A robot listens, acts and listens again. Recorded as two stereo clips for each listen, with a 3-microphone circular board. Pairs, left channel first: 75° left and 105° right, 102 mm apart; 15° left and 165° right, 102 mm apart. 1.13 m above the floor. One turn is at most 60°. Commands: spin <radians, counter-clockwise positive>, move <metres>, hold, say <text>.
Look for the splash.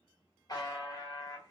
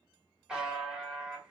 hold
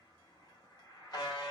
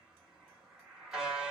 hold
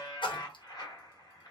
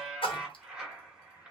spin 0.70
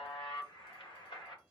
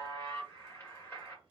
say I heard a splash from this way, but can't make it out now.